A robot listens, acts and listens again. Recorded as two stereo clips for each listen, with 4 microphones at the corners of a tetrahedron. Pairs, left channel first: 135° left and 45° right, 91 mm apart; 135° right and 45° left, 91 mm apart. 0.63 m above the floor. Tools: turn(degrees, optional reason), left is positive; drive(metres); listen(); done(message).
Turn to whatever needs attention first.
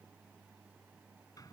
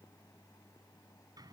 listen()
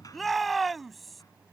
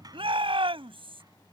turn(degrees=45, reason="The shout: 45° left.")
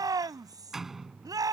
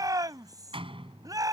done("Facing the shout.")